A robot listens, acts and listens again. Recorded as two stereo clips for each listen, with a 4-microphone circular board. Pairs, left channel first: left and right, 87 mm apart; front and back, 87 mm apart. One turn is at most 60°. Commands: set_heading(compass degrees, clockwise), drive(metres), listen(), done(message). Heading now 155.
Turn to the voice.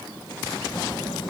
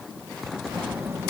set_heading(95)
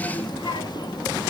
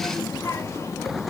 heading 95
set_heading(40)
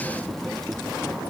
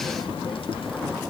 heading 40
done("Found it: a child speaking, straight ahead.")